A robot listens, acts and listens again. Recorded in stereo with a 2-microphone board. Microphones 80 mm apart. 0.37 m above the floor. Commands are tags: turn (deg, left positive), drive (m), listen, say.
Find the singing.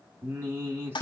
<turn deg="-30"/>
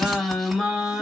<say>Facing the singing.</say>